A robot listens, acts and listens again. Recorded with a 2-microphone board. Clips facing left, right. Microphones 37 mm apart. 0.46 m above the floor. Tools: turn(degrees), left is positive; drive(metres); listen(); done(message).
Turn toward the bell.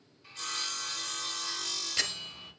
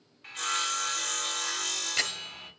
turn(degrees=-20)
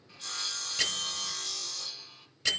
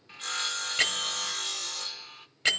turn(degrees=-135)
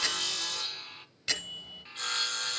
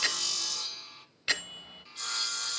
turn(degrees=-25)
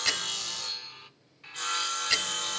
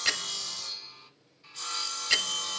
done("Found it: a bell, straight ahead.")